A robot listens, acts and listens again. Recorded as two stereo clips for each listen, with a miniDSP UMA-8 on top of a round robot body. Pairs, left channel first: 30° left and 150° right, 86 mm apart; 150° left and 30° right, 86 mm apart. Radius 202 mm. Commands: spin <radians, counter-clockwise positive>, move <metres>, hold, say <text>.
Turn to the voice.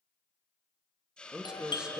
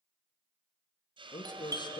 spin 2.27
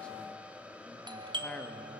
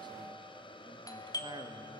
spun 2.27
hold
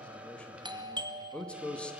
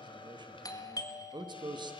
spin -0.79
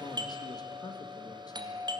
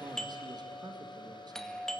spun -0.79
hold
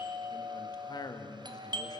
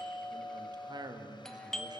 say Found it: a man speaking, straight ahead, 2 to 4 m away.